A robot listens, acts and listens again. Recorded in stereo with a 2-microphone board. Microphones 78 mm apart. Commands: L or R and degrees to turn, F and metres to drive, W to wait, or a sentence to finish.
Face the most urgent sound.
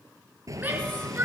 R25
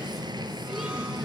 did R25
W
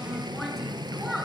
Found it: a shout, straight ahead, over 4 m away.